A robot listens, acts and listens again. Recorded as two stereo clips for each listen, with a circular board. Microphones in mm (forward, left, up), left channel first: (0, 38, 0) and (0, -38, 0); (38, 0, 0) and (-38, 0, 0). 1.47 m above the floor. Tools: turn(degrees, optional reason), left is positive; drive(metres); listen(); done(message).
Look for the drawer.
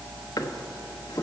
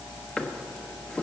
turn(degrees=75, reason="The drawer: 75° left.")
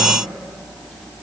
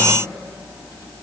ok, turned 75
listen()
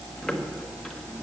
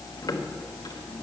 listen()
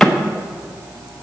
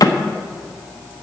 done("Facing the drawer.")